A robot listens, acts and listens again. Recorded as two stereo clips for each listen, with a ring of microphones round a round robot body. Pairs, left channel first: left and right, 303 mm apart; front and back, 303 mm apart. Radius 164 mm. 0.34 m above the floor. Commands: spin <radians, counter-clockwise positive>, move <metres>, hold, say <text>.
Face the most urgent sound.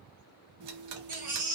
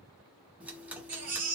spin -2.62
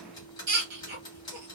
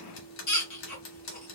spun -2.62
spin -0.70
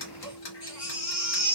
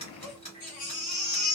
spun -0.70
spin 0.35
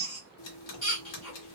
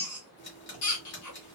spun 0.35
say Facing the baby crying, 1 to 2 m away.